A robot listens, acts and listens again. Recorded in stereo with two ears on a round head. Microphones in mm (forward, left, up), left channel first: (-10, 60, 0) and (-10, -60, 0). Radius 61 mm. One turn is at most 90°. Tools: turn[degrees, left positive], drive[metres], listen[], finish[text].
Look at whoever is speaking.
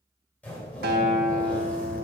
Action: listen[]
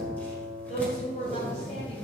Thought: The woman speaking: about 40° left or 140° left.
Action: turn[40]
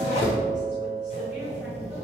Action: listen[]
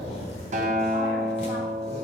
Action: listen[]
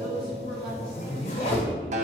Action: finish[I heard a woman speaking, but can't make it out now. It was about straight ahead or 100° left.]